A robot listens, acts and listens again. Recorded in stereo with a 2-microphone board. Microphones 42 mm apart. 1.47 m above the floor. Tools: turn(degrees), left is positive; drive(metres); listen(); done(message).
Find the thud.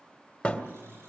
turn(degrees=20)
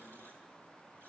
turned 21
listen()
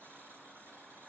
done("I heard a thud, but can't make it out now. It was about straight ahead or 140° left.")